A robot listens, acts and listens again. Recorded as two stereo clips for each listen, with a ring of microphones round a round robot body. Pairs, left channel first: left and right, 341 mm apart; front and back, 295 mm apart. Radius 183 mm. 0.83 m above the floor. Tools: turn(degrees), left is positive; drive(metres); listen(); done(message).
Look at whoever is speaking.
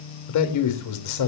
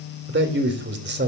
turn(degrees=125)
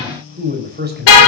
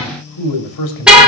turn(degrees=-30)
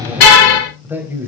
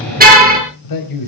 done("Found it: a man speaking, straight ahead.")